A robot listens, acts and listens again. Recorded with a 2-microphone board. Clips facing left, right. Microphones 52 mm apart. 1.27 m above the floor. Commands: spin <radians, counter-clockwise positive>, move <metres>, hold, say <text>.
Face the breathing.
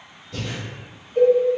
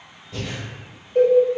spin -0.35
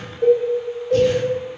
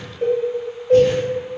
hold
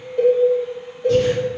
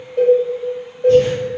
hold
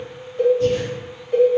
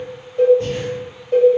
say I heard breathing, but can't make it out now. It was about straight ahead or 140° right.